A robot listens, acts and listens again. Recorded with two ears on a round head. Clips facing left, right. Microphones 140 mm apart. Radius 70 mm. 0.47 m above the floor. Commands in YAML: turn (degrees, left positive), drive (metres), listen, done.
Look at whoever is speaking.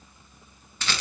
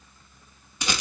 listen: true
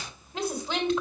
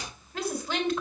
turn: 20
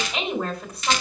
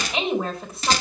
done: "Found it: a woman speaking, straight ahead, 2 to 4 m away."